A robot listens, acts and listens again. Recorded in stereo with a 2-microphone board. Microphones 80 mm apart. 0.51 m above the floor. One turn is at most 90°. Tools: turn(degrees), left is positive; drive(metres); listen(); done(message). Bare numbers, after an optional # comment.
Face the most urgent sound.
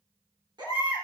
# The baby crying: about 65° right or 115° right.
turn(-65)
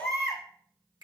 done("Facing the baby crying.")